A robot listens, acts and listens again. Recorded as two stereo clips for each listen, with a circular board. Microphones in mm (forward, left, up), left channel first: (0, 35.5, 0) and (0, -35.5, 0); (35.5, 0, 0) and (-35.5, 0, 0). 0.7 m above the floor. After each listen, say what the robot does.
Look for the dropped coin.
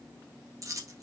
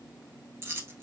Turn 125° right.
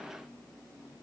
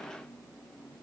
I heard a dropped coin from this way, but can't make it out now.